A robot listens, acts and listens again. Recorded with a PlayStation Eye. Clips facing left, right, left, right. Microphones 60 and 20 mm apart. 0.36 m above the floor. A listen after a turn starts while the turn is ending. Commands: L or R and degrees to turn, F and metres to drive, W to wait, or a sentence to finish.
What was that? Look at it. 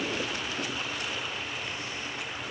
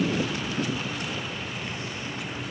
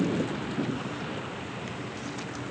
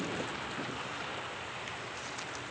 W
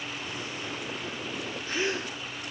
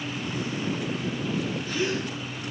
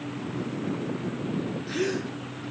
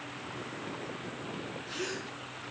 L30
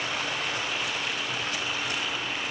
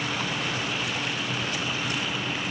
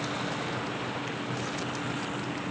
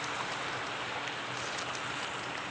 W
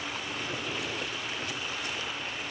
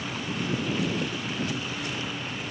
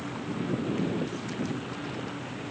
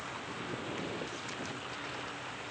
I heard a gasp, but can't make it out now. It was about straight ahead or 120° left.